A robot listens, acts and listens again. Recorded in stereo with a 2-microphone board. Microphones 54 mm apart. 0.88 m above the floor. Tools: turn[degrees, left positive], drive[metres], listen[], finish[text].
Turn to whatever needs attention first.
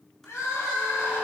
Thought: The crying: about 70° left or 110° left.
Action: turn[70]
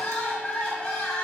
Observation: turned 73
Thought: So it is at 20° left.
Action: turn[20]
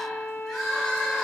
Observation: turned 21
Action: finish[Facing the crying, 1 to 2 m away.]